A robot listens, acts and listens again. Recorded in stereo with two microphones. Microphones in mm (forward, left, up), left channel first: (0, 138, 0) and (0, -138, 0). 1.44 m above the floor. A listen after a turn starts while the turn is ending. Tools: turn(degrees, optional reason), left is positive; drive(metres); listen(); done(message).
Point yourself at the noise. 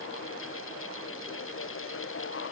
listen()
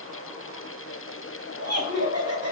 turn(degrees=-55, reason="The laughter: about 55° right or 125° right.")
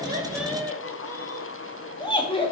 turn(degrees=20, reason="So it is at 20° left.")
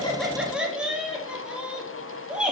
done("Facing the laughter.")